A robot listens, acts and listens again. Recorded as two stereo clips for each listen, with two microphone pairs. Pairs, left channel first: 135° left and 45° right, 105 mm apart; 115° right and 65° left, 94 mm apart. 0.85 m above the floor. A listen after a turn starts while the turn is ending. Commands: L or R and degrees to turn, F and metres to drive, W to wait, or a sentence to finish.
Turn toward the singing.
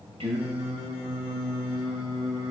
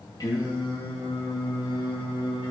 R90
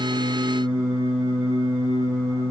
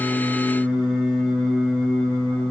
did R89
R35
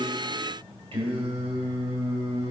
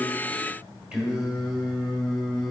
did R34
R20
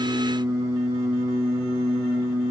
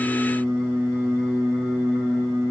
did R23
Found it: singing, straight ahead.